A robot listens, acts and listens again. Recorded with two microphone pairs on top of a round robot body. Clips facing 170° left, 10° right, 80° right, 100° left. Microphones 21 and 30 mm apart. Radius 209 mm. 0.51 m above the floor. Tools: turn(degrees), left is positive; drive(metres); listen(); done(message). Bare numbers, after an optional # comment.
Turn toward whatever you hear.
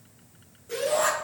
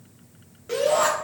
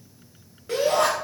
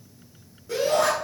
# The shout: 50° right.
turn(-50)
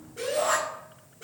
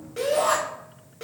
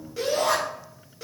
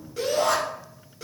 done("Facing the shout, 2 to 4 m away.")